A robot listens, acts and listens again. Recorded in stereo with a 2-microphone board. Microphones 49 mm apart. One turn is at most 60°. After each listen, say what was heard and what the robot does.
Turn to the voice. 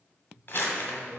The man speaking: about 30° right or 150° right. Turn 30° right.
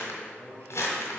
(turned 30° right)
So it is at 110° right. Turn 60° right.
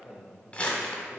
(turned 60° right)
The man speaking is now 45° right. Turn 45° right.
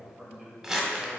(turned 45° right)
Found it: a man speaking, straight ahead, 1 to 2 m away.